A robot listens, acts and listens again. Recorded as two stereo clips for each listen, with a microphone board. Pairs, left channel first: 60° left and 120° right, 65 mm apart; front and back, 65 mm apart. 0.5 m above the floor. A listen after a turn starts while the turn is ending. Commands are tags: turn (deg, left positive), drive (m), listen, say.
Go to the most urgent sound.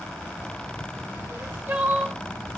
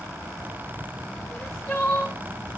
<turn deg="-55"/>
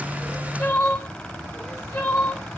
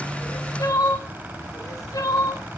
<turn deg="10"/>
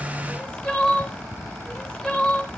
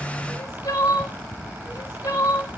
<drive m="1.0"/>
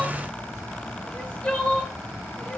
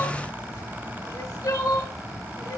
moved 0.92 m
<turn deg="-10"/>
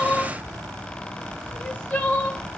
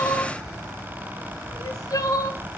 <drive m="1.0"/>
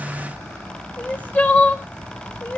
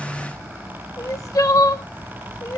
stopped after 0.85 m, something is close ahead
<say>Arrived at the crying, straight ahead.</say>